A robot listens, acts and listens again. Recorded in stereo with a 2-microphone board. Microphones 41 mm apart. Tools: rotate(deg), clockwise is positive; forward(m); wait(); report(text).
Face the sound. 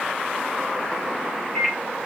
rotate(-25)
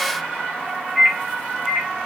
report("Found it: a microwave, straight ahead.")